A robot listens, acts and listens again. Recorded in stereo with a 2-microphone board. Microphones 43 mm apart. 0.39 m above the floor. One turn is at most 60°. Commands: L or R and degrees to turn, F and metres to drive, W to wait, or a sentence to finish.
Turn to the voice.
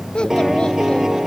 L20
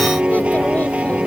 W
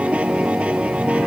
W
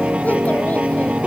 I heard a child speaking, but can't make it out now. It was about straight ahead or 140° left.